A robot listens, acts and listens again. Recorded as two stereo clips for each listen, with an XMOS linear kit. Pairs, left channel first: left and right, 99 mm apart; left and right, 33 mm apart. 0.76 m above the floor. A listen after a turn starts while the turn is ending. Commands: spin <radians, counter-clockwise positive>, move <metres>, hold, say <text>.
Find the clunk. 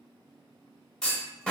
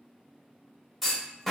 spin 0.52
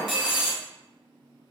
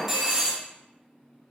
spin -0.35
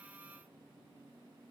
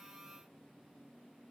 say Facing where the clunk came from. I can't hear it now.